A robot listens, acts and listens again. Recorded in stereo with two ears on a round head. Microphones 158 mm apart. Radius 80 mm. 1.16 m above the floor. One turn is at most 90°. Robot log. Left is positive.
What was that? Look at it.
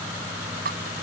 note: The dripping: about 65° right or 115° right.
cmd yaw -65
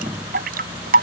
note: So it is at 50° right.
cmd yaw -50
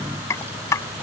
note: The dripping is now 20° left.
cmd yaw +20
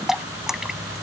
end: Found it: dripping, straight ahead.